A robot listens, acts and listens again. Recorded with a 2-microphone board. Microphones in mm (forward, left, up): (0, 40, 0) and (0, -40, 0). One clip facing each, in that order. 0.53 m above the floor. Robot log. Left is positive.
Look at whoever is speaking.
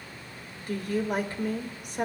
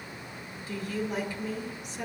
note: The woman speaking: about 55° left or 125° left.
cmd yaw +55
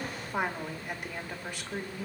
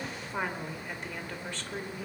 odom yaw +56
note: So it is at 15° left.
cmd yaw +15
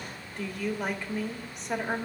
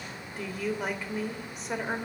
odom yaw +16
end: Facing the woman speaking, 1 to 2 m away.